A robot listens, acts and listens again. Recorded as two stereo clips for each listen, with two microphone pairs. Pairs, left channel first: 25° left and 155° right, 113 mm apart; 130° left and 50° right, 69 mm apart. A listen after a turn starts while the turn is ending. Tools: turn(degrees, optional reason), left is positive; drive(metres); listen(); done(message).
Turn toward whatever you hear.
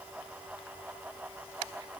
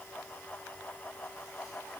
listen()
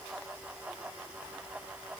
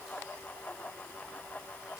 listen()
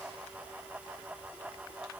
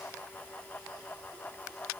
done("I can't make out anything to turn to.")